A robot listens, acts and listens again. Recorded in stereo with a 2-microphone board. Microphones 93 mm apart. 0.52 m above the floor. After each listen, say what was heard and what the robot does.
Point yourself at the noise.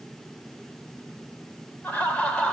Turn 30° left.
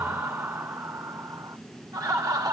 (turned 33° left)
So it is at 45° right. Turn 45° right.
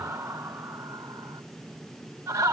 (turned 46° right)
The laughter is now 30° right. Turn 30° right.
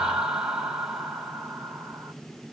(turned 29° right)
The laughter is now 10° right. Turn 10° right.
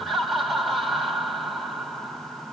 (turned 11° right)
Facing the laughter.